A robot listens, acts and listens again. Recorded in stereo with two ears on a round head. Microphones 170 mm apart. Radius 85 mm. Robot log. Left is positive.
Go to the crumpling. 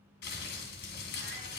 note: The crumpling: about 55° left or 125° left.
cmd yaw +55
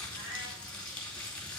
cmd fwd 1.0
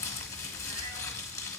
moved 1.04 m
note: The crumpling is now 20° left.
cmd yaw +20
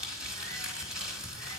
cmd fwd 1.0
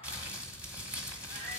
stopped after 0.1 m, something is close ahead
note: The crumpling is now 10° right.
cmd yaw -10
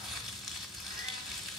end: I am next to the crumpling.